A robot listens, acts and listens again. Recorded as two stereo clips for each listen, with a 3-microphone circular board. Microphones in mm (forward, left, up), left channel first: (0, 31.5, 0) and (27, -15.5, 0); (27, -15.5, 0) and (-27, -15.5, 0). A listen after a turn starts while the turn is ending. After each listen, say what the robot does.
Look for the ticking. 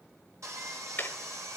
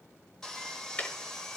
Turn 65° left.
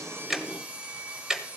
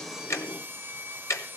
Turn 15° left.
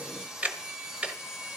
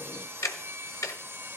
Found it: ticking, straight ahead.